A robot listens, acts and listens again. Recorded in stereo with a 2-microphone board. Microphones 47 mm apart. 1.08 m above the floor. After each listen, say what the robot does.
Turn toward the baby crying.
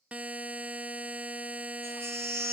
Turn 65° right.
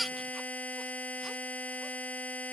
Facing the baby crying.